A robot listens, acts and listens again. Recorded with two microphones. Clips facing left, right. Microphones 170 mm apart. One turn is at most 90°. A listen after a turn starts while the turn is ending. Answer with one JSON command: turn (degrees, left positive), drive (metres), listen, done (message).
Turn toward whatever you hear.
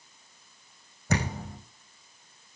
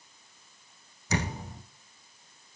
{"turn": 55}
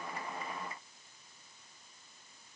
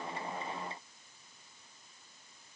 {"listen": true}
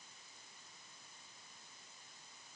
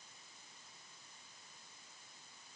{"done": "I heard a thud, but can't make it out now. It was about straight ahead or 70° left."}